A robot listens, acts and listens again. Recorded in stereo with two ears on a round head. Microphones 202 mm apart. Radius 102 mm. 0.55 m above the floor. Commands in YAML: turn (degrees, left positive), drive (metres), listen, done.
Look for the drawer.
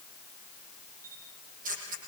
listen: true
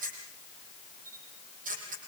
listen: true
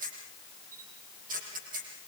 done: "I can't make out a drawer, only a camera shutter."